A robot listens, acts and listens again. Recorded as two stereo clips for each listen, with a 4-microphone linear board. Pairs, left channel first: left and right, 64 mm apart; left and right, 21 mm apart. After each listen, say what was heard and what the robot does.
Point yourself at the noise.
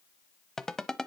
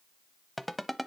Turn 30° left.
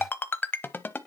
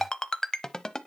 So it is at 140° left. Turn 140° left.
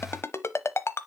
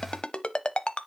The ringtone is now 50° left. Turn 50° left.
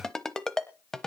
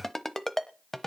The ringtone is now 10° left. Turn 10° left.
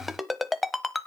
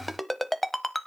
Facing the ringtone.